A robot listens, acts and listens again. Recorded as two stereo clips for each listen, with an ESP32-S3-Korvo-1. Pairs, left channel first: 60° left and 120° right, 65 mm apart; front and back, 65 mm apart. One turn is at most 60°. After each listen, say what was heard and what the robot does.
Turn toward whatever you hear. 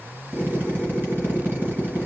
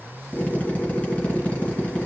The drill: 65° right. Turn 60° right.
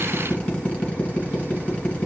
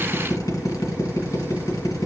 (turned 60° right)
The drill is now 10° right. Turn 10° right.
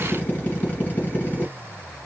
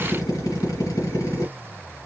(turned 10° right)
Facing the drill.